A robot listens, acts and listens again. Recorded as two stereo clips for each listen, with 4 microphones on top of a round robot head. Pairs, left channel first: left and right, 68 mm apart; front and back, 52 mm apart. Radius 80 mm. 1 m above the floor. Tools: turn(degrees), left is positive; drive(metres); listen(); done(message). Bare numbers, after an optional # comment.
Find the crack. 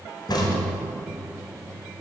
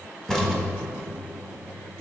# The crack: 80° left.
turn(80)
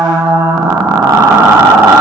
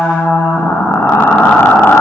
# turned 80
done("I heard a crack from this way, but can't make it out now.")